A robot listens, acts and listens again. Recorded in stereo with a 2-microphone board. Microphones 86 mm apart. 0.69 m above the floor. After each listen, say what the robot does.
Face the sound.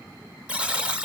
Turn 30° right.
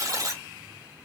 Turn 135° right.
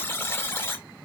Turn 30° left.
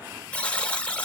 Turn 15° left.
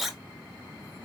Facing the buzzer.